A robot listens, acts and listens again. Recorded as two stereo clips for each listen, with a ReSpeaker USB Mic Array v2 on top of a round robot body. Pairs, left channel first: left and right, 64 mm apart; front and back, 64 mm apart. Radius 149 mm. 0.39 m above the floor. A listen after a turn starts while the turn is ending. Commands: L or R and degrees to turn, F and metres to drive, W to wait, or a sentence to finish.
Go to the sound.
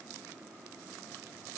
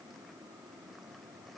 W
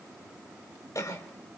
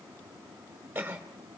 L115
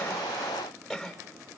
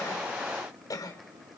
F1.0
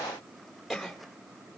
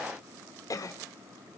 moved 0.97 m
F1.0
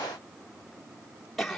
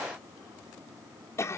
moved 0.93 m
F1.0
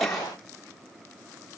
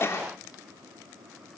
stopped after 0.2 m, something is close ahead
Arrived at the cough, straight ahead.